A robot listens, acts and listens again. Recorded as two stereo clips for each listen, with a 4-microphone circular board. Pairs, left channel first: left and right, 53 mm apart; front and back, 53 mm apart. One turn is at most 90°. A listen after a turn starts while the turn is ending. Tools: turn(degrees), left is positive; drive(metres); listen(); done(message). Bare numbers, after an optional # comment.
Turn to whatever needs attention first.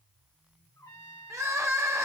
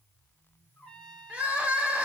# The crying: 115° right.
turn(-90)
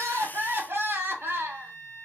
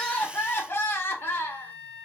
# The crying is now 45° right.
turn(-45)
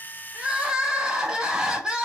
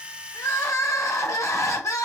# The crying is now 15° right.
turn(-15)
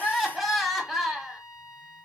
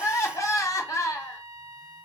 done("Facing the crying.")